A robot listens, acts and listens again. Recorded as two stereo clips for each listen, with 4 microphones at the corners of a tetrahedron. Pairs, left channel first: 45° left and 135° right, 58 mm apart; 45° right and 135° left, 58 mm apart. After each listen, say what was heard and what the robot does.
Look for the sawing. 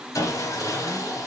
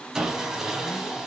The sawing: 55° left. Turn 55° left.
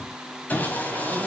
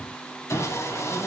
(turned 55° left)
The sawing is now 15° right. Turn 15° right.
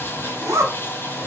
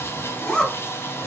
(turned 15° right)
Found it: sawing, straight ahead, 1 to 2 m away.